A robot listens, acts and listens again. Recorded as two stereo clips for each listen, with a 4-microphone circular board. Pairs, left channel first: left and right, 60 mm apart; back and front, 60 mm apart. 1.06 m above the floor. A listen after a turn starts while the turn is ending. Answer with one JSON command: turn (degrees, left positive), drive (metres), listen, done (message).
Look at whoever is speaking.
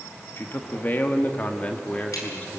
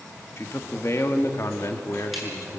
{"turn": 155}
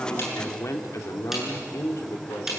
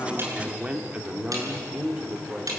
{"turn": 70}
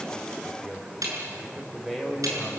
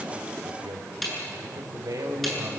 {"turn": -10}
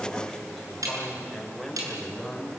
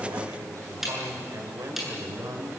{"done": "Facing the man speaking, over 4 m away."}